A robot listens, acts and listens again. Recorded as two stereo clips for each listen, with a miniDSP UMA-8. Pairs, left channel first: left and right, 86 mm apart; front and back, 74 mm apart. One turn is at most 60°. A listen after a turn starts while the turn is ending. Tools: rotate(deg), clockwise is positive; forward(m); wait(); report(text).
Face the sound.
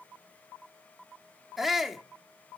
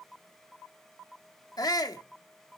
report("Found it: a shout, straight ahead.")